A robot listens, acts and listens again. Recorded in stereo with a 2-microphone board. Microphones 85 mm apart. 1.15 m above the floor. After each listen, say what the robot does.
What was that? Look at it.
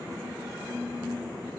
Keep listening.
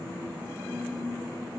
Keep listening.
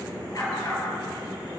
Turn 40° left.
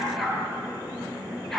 Found it: a dog barking, straight ahead, over 4 m away.